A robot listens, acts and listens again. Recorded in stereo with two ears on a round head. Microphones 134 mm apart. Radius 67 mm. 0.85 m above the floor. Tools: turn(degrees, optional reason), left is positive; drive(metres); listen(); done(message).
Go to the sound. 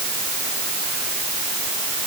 listen()
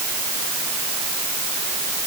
listen()
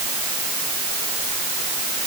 done("I can't make out anything.")